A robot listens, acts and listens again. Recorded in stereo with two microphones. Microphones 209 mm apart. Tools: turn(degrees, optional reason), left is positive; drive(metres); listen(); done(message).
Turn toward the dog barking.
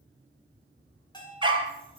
turn(degrees=-25, reason="The dog barking: about 25° right or 155° right.")
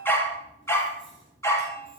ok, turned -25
turn(degrees=15, reason="So it is at 15° left.")
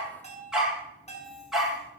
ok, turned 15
done("Found it: a dog barking, straight ahead.")